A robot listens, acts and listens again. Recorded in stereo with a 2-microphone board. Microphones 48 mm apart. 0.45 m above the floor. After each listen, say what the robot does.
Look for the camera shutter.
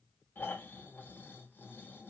Keep listening.
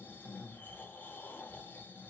Keep listening.
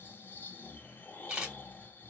Turn 25° right.
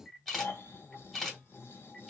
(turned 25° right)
Facing the camera shutter, 1 to 2 m away.